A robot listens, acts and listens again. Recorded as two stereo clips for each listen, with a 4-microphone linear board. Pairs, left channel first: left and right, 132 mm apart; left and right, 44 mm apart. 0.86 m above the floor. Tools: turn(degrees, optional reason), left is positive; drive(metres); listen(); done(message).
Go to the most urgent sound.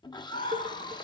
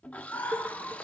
turn(degrees=60, reason="The scream: about 60° left or 120° left.")
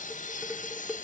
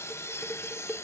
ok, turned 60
listen()
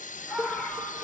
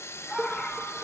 drive(metres=1.0)
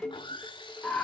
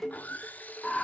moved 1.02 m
turn(degrees=10, reason="The scream is now 10° left.")
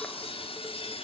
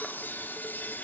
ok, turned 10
listen()
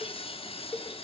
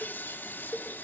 listen()
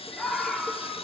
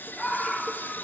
drive(metres=1.0)
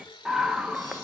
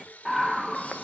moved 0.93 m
drive(metres=1.0)
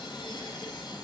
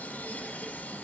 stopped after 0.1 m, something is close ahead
done("I am next to the scream.")